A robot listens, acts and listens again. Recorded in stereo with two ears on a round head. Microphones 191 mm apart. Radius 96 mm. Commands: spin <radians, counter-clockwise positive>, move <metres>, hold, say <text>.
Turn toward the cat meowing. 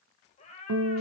spin 0.52
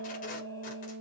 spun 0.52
hold
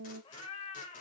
spin 0.52
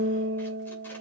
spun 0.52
hold
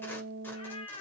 spin 0.52
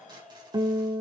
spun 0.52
say Facing the cat meowing.